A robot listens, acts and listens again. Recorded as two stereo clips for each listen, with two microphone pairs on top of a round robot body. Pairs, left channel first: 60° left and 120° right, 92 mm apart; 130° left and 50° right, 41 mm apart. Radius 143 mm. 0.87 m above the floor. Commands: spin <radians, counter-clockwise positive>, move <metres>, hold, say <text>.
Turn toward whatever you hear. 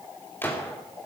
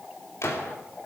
spin 2.18
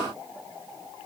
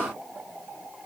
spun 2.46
spin -0.26
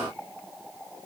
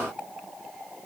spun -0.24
say Facing where the gunshot came from. I can't hear it now.